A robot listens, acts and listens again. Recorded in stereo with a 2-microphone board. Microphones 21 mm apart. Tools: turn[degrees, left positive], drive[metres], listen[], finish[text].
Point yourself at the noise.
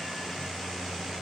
Action: listen[]
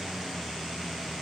Action: listen[]
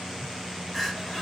Action: turn[30]
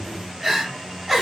Thought: So it is at 15° right.
Action: turn[-15]
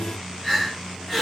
Action: finish[Facing the crying, 1 to 2 m away.]